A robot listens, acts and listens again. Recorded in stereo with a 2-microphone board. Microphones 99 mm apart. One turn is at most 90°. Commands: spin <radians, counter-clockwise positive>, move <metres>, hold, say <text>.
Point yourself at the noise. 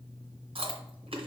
spin -1.13
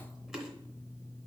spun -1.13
say Facing the chewing.